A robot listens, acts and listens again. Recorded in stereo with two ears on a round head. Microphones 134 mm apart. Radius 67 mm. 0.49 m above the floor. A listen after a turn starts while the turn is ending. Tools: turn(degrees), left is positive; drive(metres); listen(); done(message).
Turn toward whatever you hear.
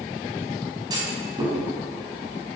turn(degrees=-30)
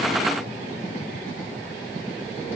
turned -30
listen()
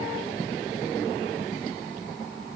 done("I heard a clunk, but can't make it out now. It was about straight ahead or 120° right.")